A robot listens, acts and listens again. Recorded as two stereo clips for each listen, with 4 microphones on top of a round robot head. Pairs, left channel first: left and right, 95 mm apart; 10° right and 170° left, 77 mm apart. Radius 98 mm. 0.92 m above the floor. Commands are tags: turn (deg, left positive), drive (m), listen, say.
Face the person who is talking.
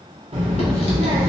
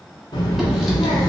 <turn deg="-60"/>
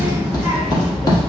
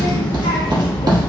<say>Facing the child speaking, under 1 m away.</say>